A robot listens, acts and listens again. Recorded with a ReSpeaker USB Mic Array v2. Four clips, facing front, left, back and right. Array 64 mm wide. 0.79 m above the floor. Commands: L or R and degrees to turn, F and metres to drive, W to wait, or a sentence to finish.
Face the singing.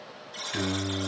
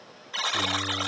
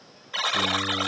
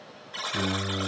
R15
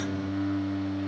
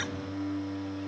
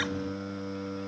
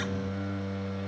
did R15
Facing the singing, over 4 m away.